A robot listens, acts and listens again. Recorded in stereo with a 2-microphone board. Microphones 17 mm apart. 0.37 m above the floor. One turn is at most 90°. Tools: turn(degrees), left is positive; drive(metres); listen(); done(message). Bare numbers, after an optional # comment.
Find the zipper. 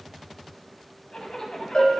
# The zipper: about 55° left or 125° left.
turn(55)
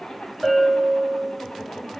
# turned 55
# So it is at 70° left.
turn(70)
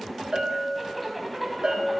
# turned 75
done("Found it: a zipper, straight ahead, under 1 m away.")